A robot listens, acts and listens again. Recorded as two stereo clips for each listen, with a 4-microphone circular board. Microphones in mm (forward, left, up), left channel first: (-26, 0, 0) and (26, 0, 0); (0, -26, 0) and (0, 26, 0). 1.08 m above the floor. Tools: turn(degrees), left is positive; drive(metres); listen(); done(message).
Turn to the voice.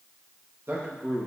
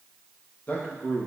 turn(degrees=-40)
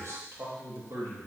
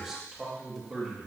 done("Found it: a man speaking, straight ahead, 2 to 4 m away.")